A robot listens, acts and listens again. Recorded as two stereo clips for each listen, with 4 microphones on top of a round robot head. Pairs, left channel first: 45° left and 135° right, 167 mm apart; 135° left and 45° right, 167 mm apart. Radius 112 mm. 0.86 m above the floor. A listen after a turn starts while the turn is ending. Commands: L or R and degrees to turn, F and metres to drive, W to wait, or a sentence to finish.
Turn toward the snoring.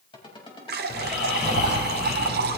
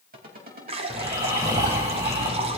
L25
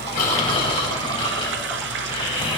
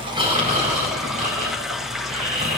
R10
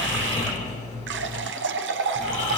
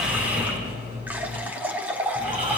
Found it: snoring, straight ahead, over 4 m away.